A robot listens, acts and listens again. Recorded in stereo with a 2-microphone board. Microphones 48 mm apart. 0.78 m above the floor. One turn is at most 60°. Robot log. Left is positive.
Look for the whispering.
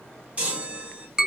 cmd idle
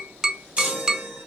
cmd idle
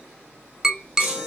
end: I can't make out whispering to turn to.